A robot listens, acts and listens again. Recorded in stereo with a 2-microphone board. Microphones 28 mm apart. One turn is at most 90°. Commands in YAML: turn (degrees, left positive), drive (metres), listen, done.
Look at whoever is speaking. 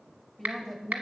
turn: 30
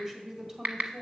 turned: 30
turn: -25
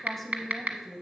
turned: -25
done: "Facing the woman speaking."